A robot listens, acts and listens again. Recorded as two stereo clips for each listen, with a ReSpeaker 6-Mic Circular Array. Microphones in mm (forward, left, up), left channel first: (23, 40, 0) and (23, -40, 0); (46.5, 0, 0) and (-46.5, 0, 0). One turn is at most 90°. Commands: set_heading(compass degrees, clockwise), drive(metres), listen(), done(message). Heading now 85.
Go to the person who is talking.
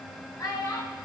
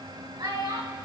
set_heading(355)
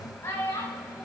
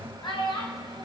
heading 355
set_heading(325)
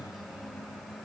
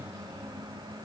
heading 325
listen()
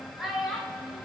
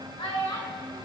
drive(1.0)
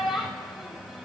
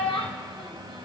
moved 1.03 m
drive(1.0)
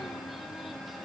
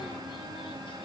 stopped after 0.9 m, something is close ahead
listen()
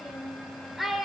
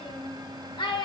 done("I am next to the child speaking.")